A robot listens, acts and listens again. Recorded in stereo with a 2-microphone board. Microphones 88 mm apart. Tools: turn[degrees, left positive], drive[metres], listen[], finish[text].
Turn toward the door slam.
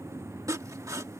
Action: listen[]
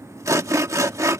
Action: listen[]
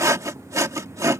Action: finish[I can't make out a door slam, only sawing.]